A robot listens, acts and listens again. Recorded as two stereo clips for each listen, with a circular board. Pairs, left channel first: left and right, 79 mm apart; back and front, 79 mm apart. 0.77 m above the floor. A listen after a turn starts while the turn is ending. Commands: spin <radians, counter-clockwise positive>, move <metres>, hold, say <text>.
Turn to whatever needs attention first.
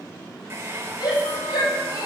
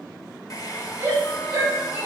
spin 1.05
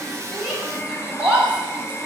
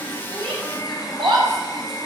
spin -0.26
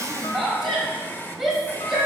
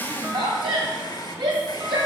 say Found it: a shout, straight ahead, 2 to 4 m away.